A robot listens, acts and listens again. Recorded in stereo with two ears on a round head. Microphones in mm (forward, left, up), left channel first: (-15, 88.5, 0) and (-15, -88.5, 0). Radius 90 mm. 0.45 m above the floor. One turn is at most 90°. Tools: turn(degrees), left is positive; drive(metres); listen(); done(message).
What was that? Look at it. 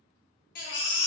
turn(degrees=50)
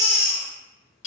turn(degrees=75)
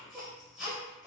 done("Facing the baby crying, under 1 m away.")